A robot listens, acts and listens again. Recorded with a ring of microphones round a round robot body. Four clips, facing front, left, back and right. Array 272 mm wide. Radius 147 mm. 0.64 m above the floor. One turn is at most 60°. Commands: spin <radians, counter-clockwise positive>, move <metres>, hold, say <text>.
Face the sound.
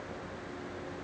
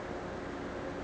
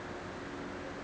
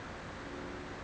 hold
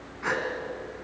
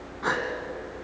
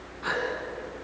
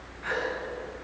spin 1.05
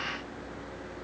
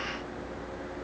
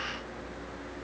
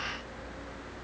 spin 0.35
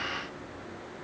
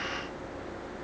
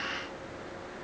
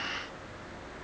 say I heard a gasp from this way, but can't make it out now.